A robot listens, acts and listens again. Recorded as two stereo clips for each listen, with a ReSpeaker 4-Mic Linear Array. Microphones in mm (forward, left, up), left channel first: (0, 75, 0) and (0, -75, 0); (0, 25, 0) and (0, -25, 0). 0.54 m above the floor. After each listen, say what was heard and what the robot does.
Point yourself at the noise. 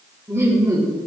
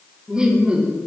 The laughter: about 25° right or 155° right. Turn 25° right.
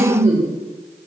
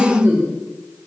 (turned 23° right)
So it is at 120° right. Turn 120° right.
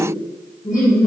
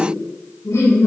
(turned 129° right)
The laughter is now 70° left. Turn 70° left.
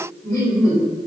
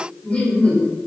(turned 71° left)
The laughter is now 15° left. Turn 15° left.
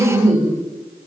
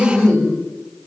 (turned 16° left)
Facing the laughter.